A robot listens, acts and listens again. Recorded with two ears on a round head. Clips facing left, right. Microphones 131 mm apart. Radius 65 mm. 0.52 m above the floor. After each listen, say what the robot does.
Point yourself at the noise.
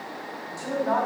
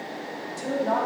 Turn 20° right.
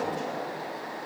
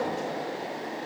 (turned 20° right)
Found it: a woman speaking, straight ahead, 2 to 4 m away.